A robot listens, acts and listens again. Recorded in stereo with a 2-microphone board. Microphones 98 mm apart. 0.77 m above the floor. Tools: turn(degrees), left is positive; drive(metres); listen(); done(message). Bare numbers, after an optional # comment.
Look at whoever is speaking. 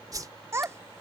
# The child speaking: about 25° right or 155° right.
turn(-25)
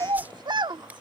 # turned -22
# So it is at 130° right.
turn(-130)
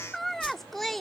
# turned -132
done("Facing the child speaking.")